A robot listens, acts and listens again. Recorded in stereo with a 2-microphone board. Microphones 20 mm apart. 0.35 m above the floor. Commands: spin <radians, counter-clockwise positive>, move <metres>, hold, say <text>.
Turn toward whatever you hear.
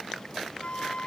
spin 1.05
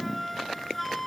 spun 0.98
say Facing the flute.